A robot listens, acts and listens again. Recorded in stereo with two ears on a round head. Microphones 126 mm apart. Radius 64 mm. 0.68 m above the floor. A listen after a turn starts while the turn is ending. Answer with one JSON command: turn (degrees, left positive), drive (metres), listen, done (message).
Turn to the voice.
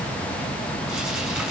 {"listen": true}
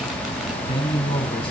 {"turn": 40}
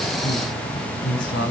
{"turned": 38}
{"turn": 105}
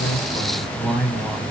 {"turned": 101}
{"done": "Facing the man speaking, over 4 m away."}